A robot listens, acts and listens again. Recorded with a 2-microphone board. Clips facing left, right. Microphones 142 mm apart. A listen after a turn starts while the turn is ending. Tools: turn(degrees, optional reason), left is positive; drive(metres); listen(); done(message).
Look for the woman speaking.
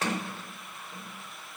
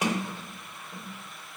listen()
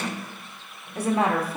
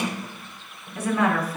turn(degrees=25, reason="The woman speaking: about 25° left or 155° left.")
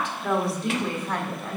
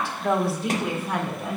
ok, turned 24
turn(degrees=-10, reason="So it is at 10° right.")
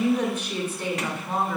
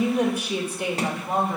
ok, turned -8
turn(degrees=-20, reason="The woman speaking is now 20° right.")
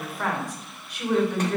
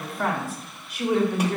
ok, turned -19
turn(degrees=-10, reason="The woman speaking is now 10° right.")
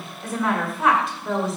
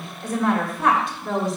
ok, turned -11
done("Found it: a woman speaking, straight ahead.")